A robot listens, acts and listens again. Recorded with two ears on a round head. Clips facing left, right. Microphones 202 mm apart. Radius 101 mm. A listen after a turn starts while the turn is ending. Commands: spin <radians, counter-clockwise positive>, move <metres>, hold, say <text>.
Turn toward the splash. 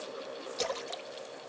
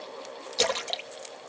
spin -1.57
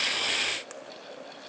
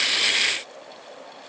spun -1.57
say I heard a splash from this way, but can't make it out now.